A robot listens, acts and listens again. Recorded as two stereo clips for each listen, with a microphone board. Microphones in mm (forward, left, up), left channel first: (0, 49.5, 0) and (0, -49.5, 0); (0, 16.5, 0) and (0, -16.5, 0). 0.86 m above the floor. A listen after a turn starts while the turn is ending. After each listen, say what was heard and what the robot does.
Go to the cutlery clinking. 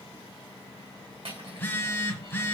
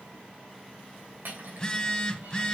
The cutlery clinking: about 70° right or 110° right. Turn 70° right.
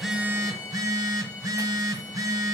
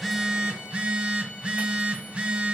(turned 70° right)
Keep listening.
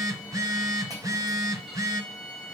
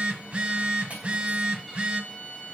Keep listening.
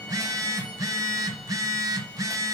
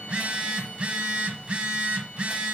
I heard cutlery clinking, but can't make it out now. It was about straight ahead or 40° right. I did not reach it.